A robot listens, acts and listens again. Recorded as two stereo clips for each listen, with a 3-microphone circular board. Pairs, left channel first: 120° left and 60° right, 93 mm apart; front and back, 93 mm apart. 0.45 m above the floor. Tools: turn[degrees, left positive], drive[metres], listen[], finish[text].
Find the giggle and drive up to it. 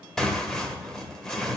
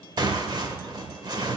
Action: listen[]
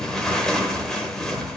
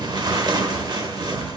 Action: listen[]
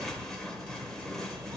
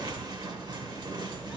Action: finish[I can't make out a giggle to turn to.]